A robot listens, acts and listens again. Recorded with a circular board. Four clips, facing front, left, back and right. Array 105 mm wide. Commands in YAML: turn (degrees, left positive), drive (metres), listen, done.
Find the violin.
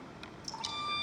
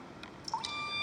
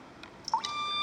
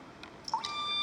turn: -135
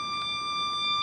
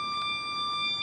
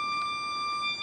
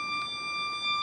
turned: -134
done: "Found it: a violin, straight ahead."